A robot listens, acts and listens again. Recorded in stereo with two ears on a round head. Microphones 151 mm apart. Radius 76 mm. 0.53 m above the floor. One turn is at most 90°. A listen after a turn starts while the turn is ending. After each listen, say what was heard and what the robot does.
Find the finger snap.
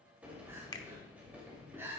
The finger snap: about 20° left or 160° left. Turn 20° left.
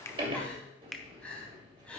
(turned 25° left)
Found it: a finger snap, straight ahead, under 1 m away.